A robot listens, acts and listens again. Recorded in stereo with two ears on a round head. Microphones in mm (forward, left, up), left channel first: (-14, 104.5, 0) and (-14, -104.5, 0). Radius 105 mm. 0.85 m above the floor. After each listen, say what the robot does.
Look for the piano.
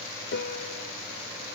Turn 50° left.
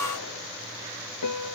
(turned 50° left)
Turn 85° left.
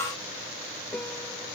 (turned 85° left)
Facing the piano.